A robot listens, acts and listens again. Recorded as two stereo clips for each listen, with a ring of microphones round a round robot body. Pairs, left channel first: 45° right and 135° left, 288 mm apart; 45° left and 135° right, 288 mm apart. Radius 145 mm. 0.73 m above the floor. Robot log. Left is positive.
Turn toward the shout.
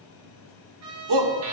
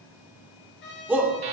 note: The shout: 140° left.
cmd yaw +140
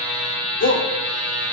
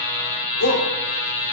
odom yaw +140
end: Found it: a shout, straight ahead.